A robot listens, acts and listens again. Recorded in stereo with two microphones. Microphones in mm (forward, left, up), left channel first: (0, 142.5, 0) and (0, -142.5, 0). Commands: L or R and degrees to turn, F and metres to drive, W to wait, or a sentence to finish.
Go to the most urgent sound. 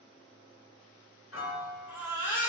L45
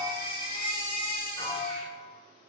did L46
L90
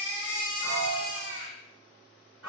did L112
R25
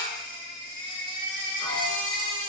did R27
F1.0
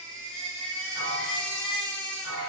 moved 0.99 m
F1.0
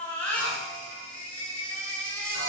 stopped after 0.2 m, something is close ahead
Arrived at the baby crying, straight ahead.